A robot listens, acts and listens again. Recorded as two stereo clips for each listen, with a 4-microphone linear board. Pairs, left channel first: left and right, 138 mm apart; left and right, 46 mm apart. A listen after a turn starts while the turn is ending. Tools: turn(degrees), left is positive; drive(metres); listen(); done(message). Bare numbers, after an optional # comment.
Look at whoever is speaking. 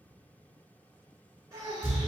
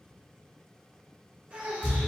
# The child speaking: about 25° right or 155° right.
turn(-25)
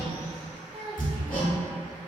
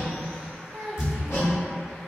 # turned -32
# So it is at 120° right.
turn(-120)
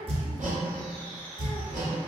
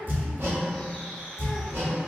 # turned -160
# Nothing new. It was at 40° left.
turn(40)
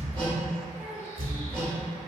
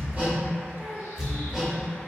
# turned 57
# The child speaking is now 15° right.
turn(-15)
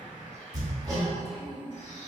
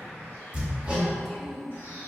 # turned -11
done("Found it: a child speaking, straight ahead, under 1 m away.")